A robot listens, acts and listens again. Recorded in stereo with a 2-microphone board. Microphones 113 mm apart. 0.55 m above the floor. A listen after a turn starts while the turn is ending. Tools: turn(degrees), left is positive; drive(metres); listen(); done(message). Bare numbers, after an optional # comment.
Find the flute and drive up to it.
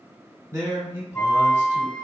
turn(30)
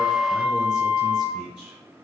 # So it is at 20° right.
turn(-20)
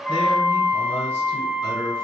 drive(1.0)
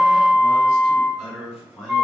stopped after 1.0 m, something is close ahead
done("Arrived at the flute, straight ahead.")